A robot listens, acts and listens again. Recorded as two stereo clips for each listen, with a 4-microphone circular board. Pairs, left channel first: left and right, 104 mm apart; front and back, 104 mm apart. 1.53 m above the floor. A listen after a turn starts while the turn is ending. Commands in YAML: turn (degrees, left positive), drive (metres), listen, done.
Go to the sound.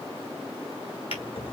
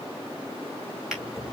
turn: 95
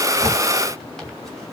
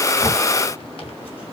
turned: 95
drive: 1.0
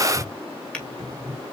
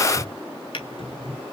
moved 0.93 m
turn: 10
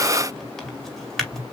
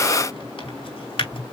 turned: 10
drive: 1.0
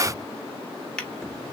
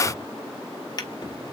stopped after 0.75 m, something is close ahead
turn: 15
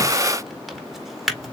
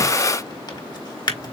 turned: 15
done: "Arrived at the drawer, straight ahead."